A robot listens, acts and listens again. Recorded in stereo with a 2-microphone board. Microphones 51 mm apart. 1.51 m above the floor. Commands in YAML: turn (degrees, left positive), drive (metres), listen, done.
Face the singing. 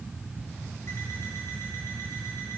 listen: true
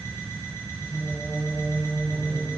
turn: 40
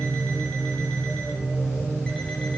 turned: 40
turn: 110
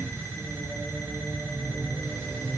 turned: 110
turn: -15
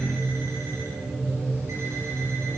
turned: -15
done: "Facing the singing, over 4 m away."